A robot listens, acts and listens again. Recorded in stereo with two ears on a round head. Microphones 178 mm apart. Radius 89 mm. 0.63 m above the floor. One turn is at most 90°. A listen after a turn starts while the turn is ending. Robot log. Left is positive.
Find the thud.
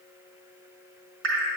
cmd idle
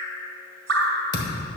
note: The thud: about 25° left or 155° left.
cmd yaw +25
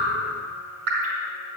cmd idle
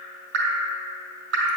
end: I heard a thud, but can't make it out now. It was about straight ahead or 130° left.